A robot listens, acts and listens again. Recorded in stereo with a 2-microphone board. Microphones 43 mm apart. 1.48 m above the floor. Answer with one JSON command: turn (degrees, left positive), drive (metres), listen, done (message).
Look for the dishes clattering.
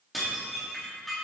{"turn": 30}
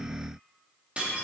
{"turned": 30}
{"turn": -30}
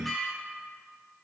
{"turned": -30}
{"done": "Found it: dishes clattering, straight ahead, 2 to 4 m away."}